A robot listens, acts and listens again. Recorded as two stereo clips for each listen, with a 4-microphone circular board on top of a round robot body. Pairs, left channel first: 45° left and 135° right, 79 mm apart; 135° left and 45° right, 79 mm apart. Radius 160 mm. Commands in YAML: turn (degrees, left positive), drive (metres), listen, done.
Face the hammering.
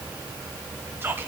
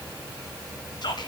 listen: true
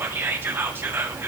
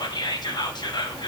listen: true
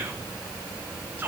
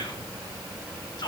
done: "I can't make out hammering, only whispering."